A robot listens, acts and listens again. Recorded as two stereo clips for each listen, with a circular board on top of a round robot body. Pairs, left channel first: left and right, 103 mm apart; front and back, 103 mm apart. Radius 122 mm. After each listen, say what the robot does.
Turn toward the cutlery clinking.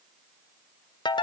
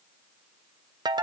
Keep listening.
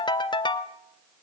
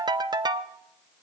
Keep listening.
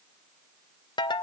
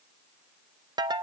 I can't make out cutlery clinking, only a ringtone.